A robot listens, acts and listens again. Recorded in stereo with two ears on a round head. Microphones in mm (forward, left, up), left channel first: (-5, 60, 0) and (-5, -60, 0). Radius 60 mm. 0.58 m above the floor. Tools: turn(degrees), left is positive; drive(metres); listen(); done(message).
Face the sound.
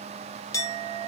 turn(degrees=25)
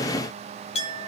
turn(degrees=125)
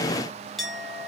done("Facing the clink.")